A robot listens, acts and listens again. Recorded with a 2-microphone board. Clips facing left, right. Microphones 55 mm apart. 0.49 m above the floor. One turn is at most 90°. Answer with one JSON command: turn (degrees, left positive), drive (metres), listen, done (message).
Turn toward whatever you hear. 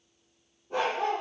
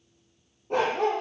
{"turn": -90}
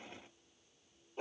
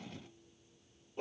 {"turn": 10}
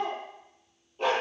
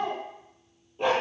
{"done": "Found it: a dog barking, straight ahead."}